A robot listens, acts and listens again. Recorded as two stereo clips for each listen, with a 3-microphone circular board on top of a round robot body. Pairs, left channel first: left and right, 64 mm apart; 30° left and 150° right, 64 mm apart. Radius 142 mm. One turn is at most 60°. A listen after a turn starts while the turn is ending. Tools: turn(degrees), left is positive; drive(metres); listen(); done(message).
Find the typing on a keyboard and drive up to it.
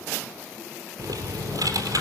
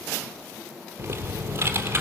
turn(degrees=-60)
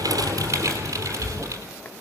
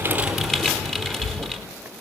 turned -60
turn(degrees=-55)
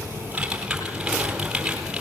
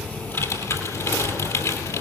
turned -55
turn(degrees=-10)
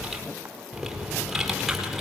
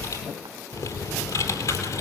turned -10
drive(metres=1.0)
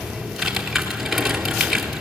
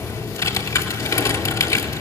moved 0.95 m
drive(metres=1.0)
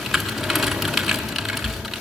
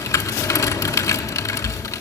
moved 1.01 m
drive(metres=1.0)
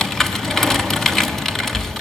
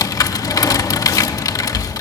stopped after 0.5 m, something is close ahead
done("I am next to the typing on a keyboard.")